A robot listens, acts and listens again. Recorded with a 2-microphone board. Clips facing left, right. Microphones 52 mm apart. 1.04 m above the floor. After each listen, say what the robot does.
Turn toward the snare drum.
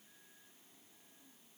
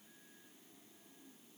Keep listening.
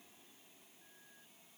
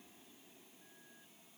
Keep listening.
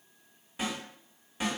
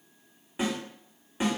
Turn 20° right.
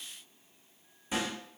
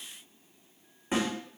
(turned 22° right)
Turn 140° right.
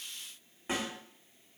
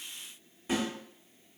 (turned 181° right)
Turn 40° left.
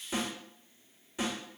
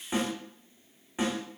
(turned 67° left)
Turn 25° right.
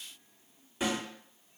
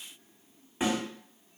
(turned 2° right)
Turn 20° right.
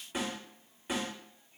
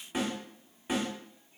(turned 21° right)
Facing the snare drum, 1 to 2 m away.